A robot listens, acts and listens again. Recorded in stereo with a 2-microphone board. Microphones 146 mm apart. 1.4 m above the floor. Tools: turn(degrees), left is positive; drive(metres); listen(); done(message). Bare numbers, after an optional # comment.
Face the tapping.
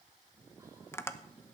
# The tapping: about 20° left or 160° left.
turn(20)
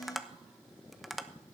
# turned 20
done("Facing the tapping, under 1 m away.")